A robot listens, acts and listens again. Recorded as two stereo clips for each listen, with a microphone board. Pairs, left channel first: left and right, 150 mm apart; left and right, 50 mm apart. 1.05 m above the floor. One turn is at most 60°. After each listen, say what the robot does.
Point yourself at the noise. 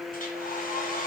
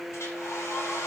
Turn 60° left.
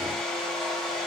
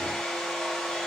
Found it: a hair dryer, straight ahead.